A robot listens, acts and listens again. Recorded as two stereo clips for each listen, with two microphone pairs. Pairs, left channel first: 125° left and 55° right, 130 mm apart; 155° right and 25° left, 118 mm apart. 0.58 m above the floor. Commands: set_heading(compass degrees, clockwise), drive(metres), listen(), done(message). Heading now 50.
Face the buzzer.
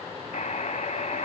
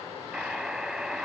set_heading(295)
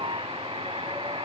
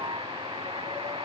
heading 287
set_heading(297)
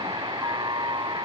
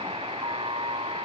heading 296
done("Found it: a buzzer, straight ahead.")